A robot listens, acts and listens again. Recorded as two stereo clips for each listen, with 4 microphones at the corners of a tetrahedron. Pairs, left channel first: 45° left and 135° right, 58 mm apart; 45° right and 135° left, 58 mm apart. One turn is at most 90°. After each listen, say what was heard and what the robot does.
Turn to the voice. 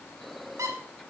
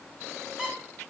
Keep listening.
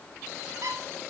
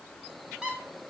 Keep listening.
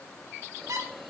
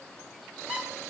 I can't make out anyone speaking to turn to.